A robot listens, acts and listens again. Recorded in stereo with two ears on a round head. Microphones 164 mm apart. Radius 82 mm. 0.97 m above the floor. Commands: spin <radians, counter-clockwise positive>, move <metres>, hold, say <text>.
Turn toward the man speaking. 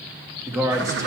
spin -0.35
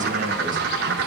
hold
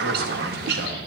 hold
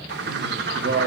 spin -1.92
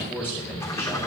spin 0.26
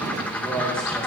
say Found it: a man speaking, straight ahead, 2 to 4 m away.